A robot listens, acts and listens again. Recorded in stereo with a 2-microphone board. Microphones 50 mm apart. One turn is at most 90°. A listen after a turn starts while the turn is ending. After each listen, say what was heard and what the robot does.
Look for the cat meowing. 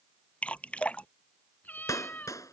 The cat meowing: about 35° left or 145° left. Turn 35° left.
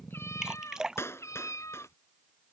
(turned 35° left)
So it is at 105° left. Turn 90° left.
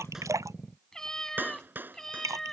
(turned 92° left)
The cat meowing is now 10° left. Turn 10° left.
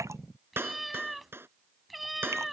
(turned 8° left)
Found it: a cat meowing, straight ahead.